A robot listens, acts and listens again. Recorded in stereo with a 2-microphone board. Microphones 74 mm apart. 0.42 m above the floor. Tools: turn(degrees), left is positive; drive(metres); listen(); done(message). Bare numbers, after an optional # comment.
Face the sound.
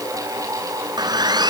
# The sawing: about 75° right or 105° right.
turn(-75)
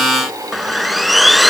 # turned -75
done("Facing the sawing.")